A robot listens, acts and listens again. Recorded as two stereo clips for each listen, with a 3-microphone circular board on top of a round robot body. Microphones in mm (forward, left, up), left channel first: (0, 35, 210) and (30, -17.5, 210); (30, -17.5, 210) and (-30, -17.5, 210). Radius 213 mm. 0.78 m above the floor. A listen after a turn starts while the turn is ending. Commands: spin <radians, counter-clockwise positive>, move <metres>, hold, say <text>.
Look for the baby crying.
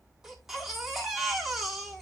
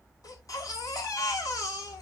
spin 0.44
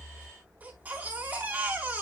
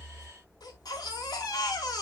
say Found it: a baby crying, straight ahead, over 4 m away.